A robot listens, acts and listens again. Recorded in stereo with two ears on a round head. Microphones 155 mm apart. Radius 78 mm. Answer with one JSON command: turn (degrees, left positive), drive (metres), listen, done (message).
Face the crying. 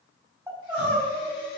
{"turn": -30}
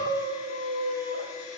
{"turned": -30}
{"turn": -140}
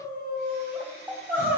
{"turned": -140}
{"turn": -15}
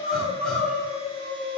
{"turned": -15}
{"done": "Facing the crying, over 4 m away."}